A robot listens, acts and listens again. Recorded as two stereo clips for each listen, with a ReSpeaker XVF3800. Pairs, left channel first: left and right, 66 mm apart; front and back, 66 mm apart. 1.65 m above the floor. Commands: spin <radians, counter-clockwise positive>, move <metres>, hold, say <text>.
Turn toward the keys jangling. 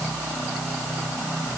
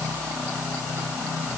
hold
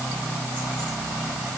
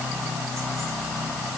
hold
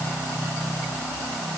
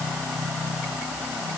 say I can't make out keys jangling to turn to.